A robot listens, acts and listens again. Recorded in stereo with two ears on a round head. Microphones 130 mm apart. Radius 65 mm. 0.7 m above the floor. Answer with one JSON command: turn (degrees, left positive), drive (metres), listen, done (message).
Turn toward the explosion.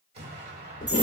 {"turn": -45}
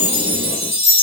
{"listen": true}
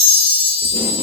{"done": "I heard an explosion, but can't make it out now. It was about straight ahead or 90° right."}